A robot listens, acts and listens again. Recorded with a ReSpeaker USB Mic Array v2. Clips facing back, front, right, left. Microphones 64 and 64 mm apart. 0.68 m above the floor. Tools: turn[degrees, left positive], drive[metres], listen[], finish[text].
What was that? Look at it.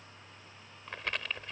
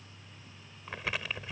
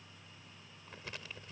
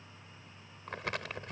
Thought: The crumpling: 85° left.
Action: turn[85]
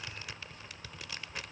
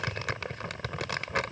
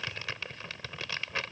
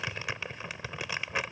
Thought: The crumpling is now 15° left.
Action: turn[15]
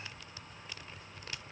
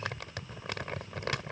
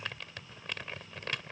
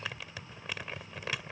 Action: finish[Facing the crumpling.]